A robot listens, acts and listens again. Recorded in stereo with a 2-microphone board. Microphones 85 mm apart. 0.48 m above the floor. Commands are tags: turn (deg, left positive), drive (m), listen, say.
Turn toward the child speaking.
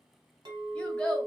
<turn deg="30"/>
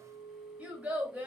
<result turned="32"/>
<turn deg="-15"/>
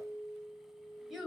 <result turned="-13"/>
<say>Facing the child speaking, 1 to 2 m away.</say>